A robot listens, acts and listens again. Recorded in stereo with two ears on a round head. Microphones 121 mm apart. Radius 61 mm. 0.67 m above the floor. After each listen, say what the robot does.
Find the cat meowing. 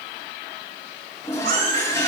Turn 90° right.
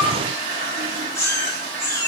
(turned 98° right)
Turn 25° left.
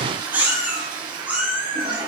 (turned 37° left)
Turn 10° right.
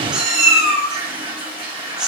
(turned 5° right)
Found it: a cat meowing, straight ahead, over 4 m away.